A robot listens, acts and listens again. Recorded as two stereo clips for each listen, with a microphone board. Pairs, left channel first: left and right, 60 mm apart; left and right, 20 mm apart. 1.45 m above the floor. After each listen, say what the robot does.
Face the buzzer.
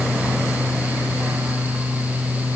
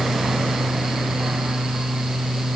Keep listening.
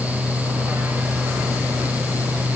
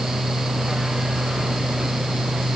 Keep listening.
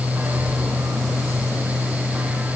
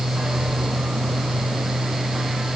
I can't make out a buzzer.